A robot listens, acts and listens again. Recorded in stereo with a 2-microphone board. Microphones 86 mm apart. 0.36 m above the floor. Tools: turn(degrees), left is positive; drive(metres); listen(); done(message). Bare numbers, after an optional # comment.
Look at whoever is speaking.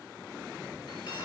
listen()
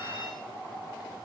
listen()
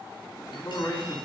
# The man speaking: about 55° left or 125° left.
turn(55)
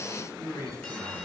# So it is at 45° left.
turn(45)
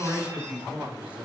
# The man speaking is now 20° right.
turn(-20)
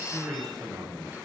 done("Found it: a man speaking, straight ahead.")